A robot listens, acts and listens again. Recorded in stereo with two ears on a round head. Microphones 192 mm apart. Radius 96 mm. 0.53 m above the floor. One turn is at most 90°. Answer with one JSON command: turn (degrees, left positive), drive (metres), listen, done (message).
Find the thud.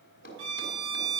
{"turn": 45}
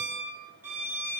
{"listen": true}
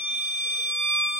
{"done": "I heard a thud, but can't make it out now. It was about straight ahead or 90° left."}